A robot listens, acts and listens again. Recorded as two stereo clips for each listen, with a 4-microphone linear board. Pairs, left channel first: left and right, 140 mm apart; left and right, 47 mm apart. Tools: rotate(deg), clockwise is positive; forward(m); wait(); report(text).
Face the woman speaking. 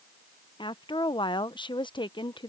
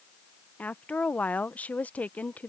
rotate(-35)
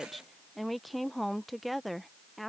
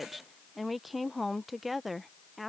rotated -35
report("Found it: a woman speaking, straight ahead.")